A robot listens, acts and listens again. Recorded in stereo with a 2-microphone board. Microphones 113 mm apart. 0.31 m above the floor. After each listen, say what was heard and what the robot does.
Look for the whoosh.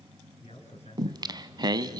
Keep listening.
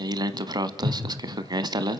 Turn 30° right.
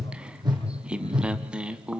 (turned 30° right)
So it is at 140° right. Turn 140° right.
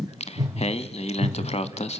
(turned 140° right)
The whoosh is now 35° right. Turn 35° right.
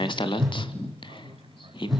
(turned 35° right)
Facing the whoosh, over 4 m away.